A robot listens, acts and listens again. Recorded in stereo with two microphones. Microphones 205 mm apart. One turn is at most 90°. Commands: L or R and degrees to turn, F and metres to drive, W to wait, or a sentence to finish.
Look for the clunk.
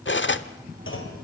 L75
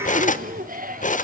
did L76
W
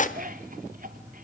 I heard a clunk, but can't make it out now. It was about 5° right or 30° left.